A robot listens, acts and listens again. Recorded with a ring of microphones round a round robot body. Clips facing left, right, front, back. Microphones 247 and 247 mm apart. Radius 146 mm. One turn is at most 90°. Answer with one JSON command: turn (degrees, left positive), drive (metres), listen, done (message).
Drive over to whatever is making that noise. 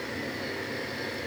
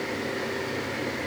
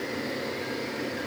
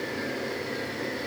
{"listen": true}
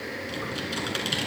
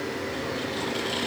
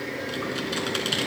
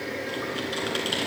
{"turn": 60}
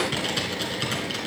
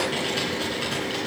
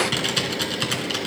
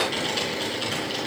{"turn": 20}
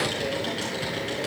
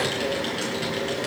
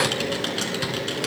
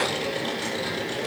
{"drive": 1.0}
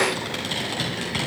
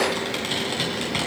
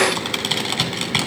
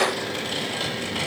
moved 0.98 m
{"drive": 1.0}
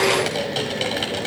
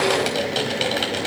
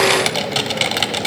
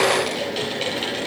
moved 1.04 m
{"drive": 1.0}
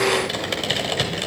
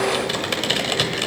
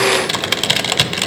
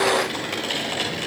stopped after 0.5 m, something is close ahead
{"done": "I am next to the typing on a keyboard."}